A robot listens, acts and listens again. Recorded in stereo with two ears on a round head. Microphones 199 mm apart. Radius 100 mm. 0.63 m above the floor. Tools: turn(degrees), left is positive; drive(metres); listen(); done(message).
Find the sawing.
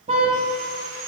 turn(degrees=-90)
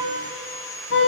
turn(degrees=10)
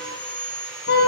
done("Facing the sawing.")